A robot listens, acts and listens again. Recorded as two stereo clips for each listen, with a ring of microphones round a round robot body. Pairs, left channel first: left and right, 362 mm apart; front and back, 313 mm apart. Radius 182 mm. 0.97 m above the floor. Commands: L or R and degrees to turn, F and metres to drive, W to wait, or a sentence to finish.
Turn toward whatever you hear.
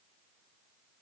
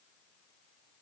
W
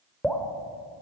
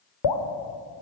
Facing the dripping.